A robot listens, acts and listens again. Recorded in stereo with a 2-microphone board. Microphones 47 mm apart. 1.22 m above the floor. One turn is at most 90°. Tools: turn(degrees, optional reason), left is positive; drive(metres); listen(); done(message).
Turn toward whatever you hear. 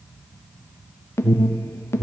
turn(degrees=65, reason="The alarm: about 65° left or 115° left.")
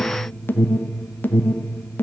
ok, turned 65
turn(degrees=50, reason="So it is at 50° left.")
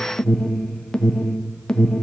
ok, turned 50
turn(degrees=20, reason="The alarm is now 20° left.")
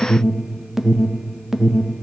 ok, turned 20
done("Facing the alarm.")